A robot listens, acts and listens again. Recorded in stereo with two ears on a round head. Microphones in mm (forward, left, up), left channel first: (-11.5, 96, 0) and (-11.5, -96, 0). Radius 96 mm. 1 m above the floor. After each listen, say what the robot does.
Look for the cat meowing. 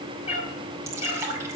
Turn 30° left.
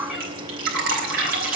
Keep listening.
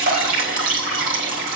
Keep listening.
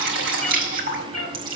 Facing the cat meowing, over 4 m away.